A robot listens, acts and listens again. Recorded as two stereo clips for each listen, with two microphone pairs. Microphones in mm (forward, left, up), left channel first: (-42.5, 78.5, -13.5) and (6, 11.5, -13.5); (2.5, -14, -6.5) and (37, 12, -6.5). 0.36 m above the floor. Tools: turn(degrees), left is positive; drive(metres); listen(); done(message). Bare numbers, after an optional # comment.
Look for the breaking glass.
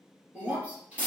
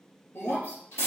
# The breaking glass: 125° right.
turn(-125)
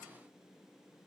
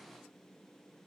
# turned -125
done("Facing where the breaking glass came from. I can't hear it now.")